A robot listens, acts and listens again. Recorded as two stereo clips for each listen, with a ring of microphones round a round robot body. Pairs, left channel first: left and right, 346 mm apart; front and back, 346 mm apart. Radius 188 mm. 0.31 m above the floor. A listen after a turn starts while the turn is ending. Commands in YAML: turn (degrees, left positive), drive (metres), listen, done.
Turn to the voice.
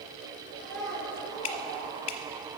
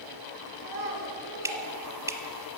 turn: 180
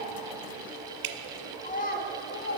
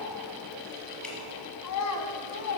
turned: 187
turn: 35
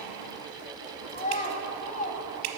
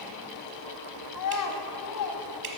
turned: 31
turn: 25
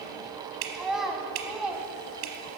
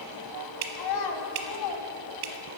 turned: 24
done: "Facing the child speaking, 1 to 2 m away."